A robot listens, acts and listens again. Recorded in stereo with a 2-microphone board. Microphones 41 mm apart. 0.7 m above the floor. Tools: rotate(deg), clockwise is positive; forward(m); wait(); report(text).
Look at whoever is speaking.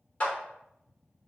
wait()
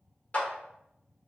wait()
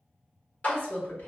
rotate(-65)
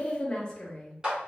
rotate(-20)
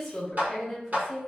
report("Found it: a woman speaking, straight ahead.")